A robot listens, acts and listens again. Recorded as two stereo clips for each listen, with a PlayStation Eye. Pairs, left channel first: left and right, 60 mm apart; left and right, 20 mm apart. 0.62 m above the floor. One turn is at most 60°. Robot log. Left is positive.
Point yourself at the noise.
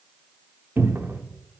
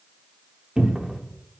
note: The cupboard door: about 35° right or 145° right.
cmd yaw -35
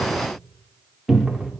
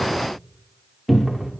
end: Facing the cupboard door, under 1 m away.